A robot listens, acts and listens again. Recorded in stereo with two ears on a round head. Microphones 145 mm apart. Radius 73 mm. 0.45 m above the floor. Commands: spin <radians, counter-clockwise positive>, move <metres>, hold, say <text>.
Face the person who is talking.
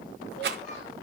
hold
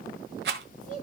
spin 0.79
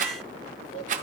hold
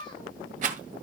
spin 1.57
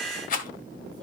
hold
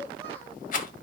hold
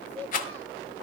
spin -0.44
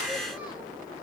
hold
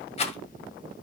hold
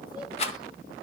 say I heard a child speaking from this way, but can't make it out now.